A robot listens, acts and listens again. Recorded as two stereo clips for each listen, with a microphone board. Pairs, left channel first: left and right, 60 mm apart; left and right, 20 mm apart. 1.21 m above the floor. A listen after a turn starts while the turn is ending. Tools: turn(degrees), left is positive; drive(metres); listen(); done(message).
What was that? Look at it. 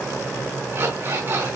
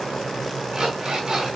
turn(degrees=-40)
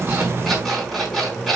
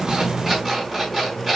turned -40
done("Facing the alarm clock, over 4 m away.")